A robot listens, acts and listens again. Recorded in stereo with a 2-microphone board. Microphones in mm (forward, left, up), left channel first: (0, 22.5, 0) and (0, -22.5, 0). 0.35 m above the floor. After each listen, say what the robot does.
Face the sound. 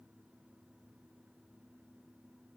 Keep listening.
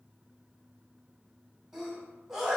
Turn 30° right.
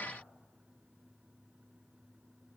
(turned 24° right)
Keep listening.
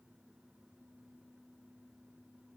I heard a sneeze, but can't make it out now. It was about 10° left or 140° right.